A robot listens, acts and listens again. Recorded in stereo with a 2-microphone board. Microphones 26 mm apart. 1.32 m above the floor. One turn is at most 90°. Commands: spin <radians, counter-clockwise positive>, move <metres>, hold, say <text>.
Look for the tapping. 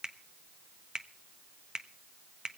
hold
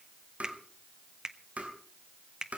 spin -1.13
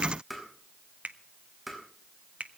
say Facing the tapping.